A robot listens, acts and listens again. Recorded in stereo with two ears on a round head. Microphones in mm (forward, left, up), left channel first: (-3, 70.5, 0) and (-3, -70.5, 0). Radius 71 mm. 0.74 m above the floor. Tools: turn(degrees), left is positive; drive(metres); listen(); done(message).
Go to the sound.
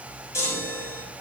turn(degrees=20)
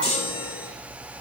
turn(degrees=140)
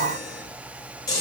turn(degrees=25)
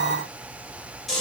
drive(metres=1.0)
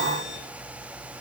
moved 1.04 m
listen()
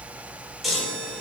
drive(metres=1.0)
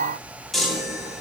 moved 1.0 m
drive(metres=1.0)
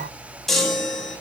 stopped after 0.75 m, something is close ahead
done("Arrived at the chime, straight ahead.")